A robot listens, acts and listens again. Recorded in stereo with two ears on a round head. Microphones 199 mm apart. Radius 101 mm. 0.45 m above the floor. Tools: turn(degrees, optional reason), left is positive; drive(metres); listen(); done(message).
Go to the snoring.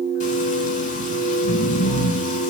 turn(degrees=90)
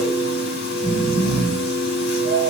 drive(metres=1.0)
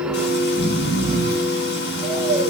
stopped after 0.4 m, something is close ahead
done("Blocked. The snoring is further on, straight ahead.")